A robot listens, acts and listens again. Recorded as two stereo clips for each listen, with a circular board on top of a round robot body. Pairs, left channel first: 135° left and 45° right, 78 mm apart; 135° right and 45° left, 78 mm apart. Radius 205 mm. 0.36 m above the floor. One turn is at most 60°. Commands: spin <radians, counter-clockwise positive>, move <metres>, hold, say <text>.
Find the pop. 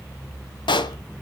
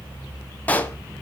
spin 1.05
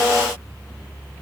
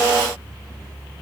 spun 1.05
spin 1.05
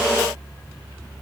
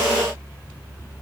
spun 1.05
spin 0.61
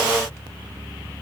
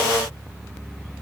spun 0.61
say I heard a pop from this way, but can't make it out now.